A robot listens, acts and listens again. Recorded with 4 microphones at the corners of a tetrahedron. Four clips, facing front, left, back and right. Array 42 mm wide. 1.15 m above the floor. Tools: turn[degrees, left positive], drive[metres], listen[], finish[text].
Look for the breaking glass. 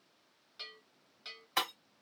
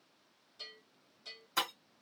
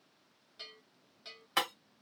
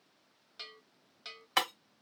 Thought: The breaking glass: 100° right.
Action: turn[-100]
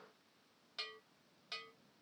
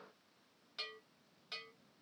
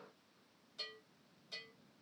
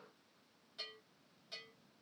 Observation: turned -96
Action: finish[I heard breaking glass from this way, but can't make it out now.]